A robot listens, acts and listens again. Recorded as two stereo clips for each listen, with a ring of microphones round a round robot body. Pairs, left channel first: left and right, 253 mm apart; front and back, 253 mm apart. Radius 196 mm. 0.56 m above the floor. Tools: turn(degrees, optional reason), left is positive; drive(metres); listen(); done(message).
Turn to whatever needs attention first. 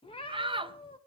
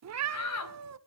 turn(degrees=-20, reason="The shout: 20° right.")
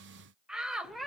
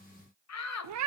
done("Found it: a shout, straight ahead, 2 to 4 m away.")